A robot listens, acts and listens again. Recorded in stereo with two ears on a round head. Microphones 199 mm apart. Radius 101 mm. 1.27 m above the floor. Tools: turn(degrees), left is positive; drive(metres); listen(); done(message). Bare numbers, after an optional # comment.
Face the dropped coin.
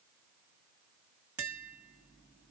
listen()
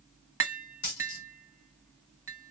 # The dropped coin: about 60° left or 120° left.
turn(60)
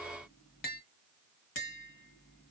listen()
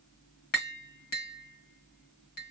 done("I heard a dropped coin, but can't make it out now. It was about straight ahead or 60° left.")